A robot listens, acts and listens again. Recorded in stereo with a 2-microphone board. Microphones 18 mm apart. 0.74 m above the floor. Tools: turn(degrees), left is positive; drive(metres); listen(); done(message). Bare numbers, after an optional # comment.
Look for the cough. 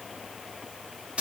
listen()
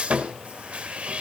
listen()
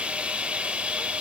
done("I can't make out a cough, only sawing.")